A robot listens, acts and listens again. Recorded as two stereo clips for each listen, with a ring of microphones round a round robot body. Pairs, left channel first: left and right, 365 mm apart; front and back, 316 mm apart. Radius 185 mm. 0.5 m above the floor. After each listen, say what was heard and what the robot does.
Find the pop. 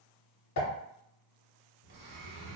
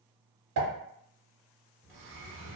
The pop: 140° left. Turn 140° left.
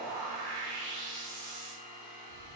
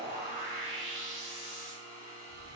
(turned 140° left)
Facing where the pop came from. I can't hear it now.